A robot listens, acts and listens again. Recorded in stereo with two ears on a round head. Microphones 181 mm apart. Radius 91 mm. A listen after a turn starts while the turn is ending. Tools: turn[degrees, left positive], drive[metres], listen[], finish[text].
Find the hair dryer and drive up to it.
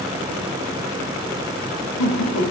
Action: listen[]
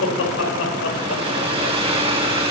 Thought: The hair dryer: about 30° right or 150° right.
Action: turn[-30]
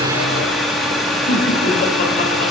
Action: drive[1.0]
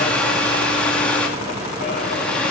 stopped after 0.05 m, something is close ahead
Action: finish[Blocked. The hair dryer is further on, straight ahead.]